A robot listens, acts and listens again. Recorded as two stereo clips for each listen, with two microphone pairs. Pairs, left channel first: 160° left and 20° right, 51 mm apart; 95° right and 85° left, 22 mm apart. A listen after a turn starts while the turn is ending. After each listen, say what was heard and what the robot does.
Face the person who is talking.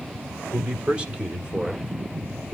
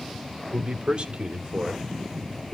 The man speaking: 50° left. Turn 50° left.
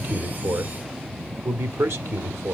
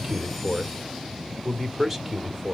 Facing the man speaking.